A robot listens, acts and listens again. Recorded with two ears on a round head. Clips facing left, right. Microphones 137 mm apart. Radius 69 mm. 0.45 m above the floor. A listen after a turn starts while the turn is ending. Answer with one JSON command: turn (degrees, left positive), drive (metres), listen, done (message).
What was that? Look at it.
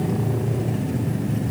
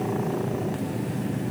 {"listen": true}
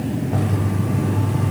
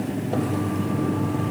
{"turn": -30}
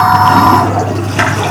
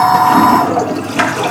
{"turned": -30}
{"done": "Facing the toilet flushing, over 4 m away."}